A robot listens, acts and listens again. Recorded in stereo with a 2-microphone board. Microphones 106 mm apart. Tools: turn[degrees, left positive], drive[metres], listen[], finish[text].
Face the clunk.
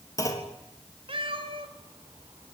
Thought: The clunk: about 30° left or 150° left.
Action: turn[30]
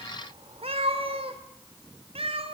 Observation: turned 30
Action: listen[]
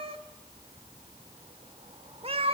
Action: finish[I heard a clunk, but can't make it out now. It was about straight ahead or 120° left.]